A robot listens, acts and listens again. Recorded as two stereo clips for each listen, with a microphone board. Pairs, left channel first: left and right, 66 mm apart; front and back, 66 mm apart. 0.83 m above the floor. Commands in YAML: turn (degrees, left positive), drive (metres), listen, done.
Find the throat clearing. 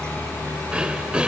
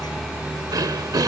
turn: -165
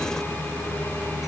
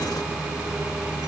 listen: true
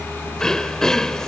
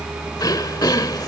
turn: 10
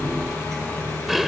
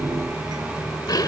done: "Facing the throat clearing."